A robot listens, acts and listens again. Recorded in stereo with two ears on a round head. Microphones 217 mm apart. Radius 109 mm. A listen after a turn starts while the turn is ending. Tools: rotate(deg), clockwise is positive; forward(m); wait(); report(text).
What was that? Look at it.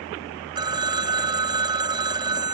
rotate(20)
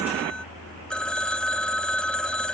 report("Found it: a phone ringing, straight ahead.")